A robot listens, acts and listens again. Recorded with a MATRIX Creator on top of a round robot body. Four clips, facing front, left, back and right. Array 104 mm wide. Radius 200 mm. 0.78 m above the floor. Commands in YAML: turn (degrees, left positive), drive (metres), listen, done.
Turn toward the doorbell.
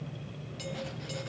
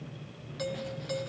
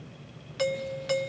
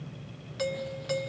turn: -165
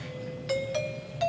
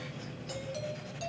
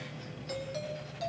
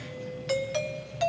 turn: -60
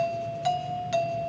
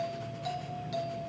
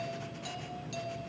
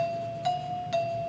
turn: -30
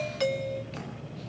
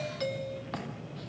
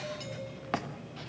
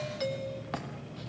done: "Found it: a doorbell, straight ahead, 1 to 2 m away."